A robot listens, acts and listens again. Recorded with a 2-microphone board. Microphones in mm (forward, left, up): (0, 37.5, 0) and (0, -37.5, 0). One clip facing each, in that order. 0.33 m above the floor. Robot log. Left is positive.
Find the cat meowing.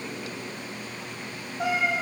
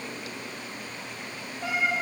cmd yaw +90
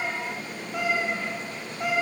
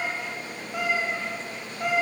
end: Found it: a cat meowing, straight ahead, over 4 m away.